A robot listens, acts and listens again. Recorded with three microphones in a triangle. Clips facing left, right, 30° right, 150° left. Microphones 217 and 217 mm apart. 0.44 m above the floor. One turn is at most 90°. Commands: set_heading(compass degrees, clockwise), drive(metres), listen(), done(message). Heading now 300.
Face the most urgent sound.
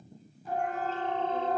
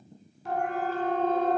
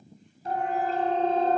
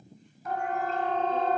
set_heading(30)
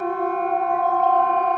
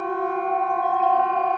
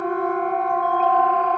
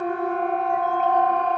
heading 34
done("Facing the siren.")